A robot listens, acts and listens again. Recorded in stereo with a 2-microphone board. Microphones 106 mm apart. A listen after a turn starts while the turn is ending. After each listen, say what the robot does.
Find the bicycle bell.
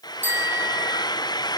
Turn 15° right.
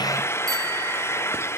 Keep listening.
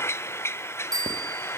Turn 145° right.
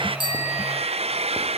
Keep listening.
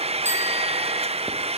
Keep listening.
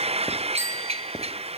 Turn 25° right.
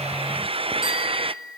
Found it: a bicycle bell, straight ahead.